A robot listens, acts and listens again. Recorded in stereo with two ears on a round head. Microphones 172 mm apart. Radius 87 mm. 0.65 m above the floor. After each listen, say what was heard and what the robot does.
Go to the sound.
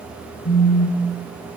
The phone buzzing: about 45° left or 135° left. Turn 45° left.
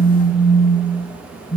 Drive 1.0 m forward.
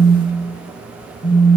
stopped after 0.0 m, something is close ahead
Blocked. The phone buzzing is further on, straight ahead.